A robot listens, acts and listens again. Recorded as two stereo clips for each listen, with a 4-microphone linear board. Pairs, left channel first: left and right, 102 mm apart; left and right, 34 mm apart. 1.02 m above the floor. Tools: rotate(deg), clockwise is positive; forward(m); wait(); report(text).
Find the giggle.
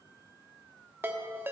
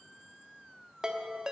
wait()
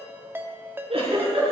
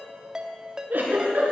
rotate(70)
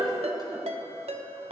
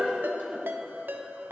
rotate(40)
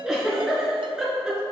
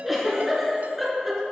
report("Facing the giggle, over 4 m away.")